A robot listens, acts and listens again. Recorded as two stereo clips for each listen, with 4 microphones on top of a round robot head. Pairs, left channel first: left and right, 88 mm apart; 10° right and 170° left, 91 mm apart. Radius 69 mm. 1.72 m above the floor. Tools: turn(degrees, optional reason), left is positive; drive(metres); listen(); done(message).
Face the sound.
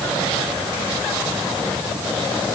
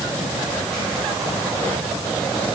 listen()
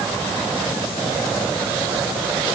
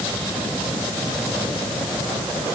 listen()
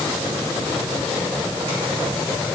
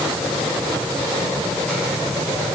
done("I can't make out anything to turn to.")